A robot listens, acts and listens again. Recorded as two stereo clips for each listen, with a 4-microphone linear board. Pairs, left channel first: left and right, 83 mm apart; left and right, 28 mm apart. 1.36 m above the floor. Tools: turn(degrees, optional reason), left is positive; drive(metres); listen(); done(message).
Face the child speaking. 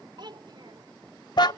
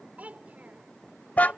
turn(degrees=-65, reason="The child speaking: about 65° right or 115° right.")
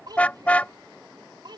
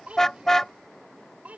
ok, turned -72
turn(degrees=-60, reason="So it is at 60° right.")
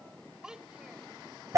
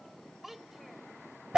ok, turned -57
turn(degrees=-10, reason="The child speaking is now 10° right.")
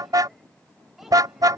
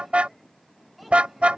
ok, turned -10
listen()
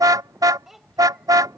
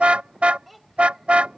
done("Found it: a child speaking, straight ahead.")